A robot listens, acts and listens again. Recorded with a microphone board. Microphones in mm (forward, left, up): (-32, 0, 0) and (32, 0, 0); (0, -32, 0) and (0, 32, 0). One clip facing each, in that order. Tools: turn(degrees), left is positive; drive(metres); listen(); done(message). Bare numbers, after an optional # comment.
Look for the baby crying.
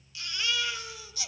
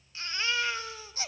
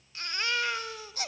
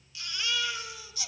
# The baby crying: 50° right.
turn(-50)
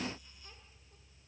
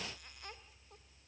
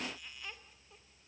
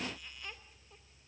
listen()
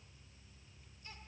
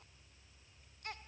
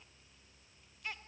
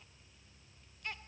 done("Facing the baby crying, 1 to 2 m away.")